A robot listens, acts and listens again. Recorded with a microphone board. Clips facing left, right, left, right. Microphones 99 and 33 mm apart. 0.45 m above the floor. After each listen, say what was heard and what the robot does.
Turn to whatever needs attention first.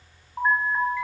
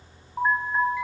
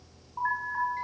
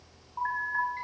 Turn 30° right.
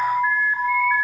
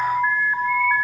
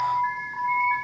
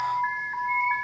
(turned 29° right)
So it is at 150° right. Turn 150° right.
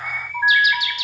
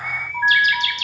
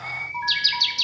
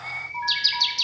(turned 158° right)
The alarm is now 10° left. Turn 10° left.
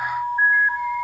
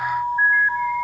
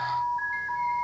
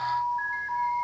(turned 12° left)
Facing the alarm, 2 to 4 m away.